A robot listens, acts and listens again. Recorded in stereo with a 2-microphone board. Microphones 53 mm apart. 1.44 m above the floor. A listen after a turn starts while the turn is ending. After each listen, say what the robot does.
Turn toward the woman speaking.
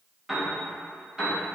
Keep listening.
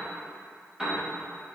Keep listening.
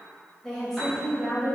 Turn 30° left.
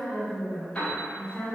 Turn 155° left.
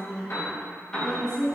Turn 15° left.
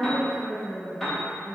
Facing the woman speaking, 2 to 4 m away.